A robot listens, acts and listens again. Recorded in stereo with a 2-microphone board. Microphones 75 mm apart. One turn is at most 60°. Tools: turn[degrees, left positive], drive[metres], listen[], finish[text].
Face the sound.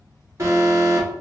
Thought: The alarm: about 40° right or 140° right.
Action: turn[-40]
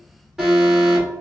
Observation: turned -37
Action: finish[Facing the alarm.]